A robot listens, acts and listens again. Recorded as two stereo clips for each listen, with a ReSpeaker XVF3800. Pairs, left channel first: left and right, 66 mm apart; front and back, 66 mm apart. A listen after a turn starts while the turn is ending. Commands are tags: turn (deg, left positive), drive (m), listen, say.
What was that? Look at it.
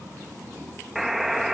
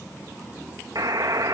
<turn deg="180"/>
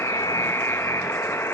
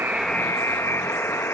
<turn deg="45"/>
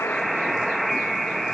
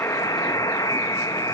<say>Found it: a buzzer, straight ahead, 1 to 2 m away.</say>